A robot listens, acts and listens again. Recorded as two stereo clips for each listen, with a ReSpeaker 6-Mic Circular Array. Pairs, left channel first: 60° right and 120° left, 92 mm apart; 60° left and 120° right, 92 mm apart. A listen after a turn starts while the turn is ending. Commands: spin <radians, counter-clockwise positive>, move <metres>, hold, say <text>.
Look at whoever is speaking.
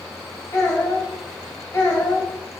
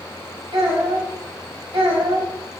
spin -2.09
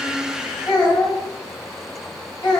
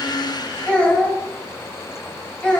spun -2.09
spin -0.26
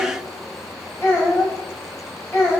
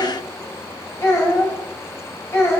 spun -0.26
say Found it: a child speaking, straight ahead, 1 to 2 m away.